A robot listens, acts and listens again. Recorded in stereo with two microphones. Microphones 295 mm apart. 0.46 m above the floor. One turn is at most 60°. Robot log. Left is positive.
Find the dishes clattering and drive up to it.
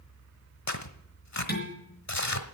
note: The dishes clattering: about 35° left or 145° left.
cmd yaw +35
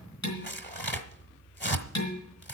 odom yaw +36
note: So it is at 110° left.
cmd yaw +60
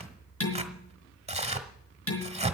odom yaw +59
note: The dishes clattering is now 50° left.
cmd yaw +50
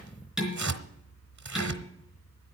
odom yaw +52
cmd fwd 1.0
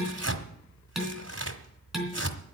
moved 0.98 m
cmd fwd 1.0
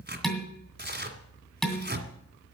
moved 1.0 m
cmd fwd 1.0
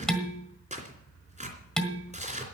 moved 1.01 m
cmd fwd 1.0
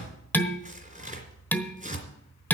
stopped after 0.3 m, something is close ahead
end: I am next to the dishes clattering.